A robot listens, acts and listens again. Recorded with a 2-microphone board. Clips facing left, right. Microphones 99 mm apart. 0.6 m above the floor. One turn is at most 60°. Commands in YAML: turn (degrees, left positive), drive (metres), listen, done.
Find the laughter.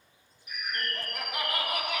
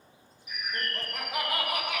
turn: -60
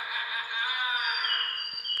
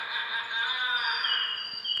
turn: -35
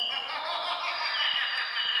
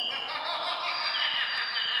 turn: -10
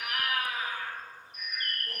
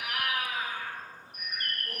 done: "Found it: laughter, straight ahead, 2 to 4 m away."